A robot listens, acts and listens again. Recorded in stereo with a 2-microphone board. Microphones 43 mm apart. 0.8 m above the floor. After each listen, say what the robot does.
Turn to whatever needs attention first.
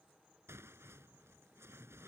Keep listening.
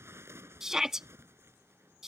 Turn 30° right.
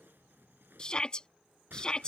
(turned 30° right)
Turn 20° left.
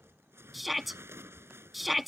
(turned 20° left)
Found it: a shout, straight ahead.